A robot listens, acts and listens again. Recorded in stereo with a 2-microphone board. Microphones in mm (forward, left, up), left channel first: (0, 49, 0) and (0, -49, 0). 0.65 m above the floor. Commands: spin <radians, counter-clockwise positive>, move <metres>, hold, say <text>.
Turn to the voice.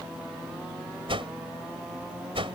hold
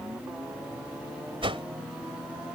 hold
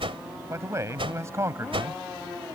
spin -0.52
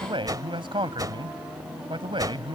spin -2.09
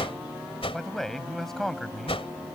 say Found it: a man speaking, straight ahead.